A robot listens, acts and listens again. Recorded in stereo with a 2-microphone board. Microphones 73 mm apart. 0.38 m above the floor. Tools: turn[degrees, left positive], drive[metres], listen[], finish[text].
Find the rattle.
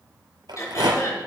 Action: turn[-90]
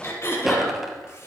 Action: finish[Facing the rattle, 2 to 4 m away.]